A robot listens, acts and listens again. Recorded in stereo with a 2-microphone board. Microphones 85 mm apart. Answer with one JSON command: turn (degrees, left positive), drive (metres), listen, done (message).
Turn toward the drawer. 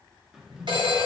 {"turn": -30}
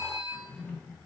{"turn": 20}
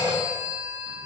{"listen": true}
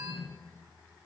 {"done": "Facing the drawer."}